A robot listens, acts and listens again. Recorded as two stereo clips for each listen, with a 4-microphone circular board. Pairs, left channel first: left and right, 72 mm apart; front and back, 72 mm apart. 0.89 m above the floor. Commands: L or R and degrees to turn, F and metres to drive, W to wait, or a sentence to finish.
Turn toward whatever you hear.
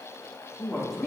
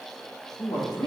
Facing the woman speaking, 1 to 2 m away.